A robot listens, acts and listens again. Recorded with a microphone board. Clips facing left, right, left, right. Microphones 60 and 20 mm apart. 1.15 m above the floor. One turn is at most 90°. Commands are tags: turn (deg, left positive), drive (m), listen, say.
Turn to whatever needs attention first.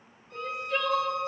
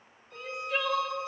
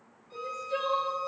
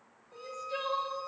<turn deg="30"/>
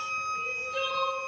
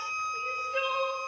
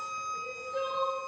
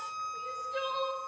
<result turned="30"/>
<turn deg="-30"/>
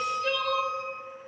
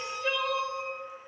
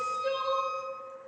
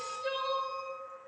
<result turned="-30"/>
<turn deg="-10"/>
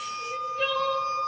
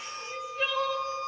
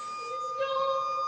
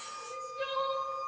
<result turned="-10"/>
<say>Found it: crying, straight ahead, under 1 m away.</say>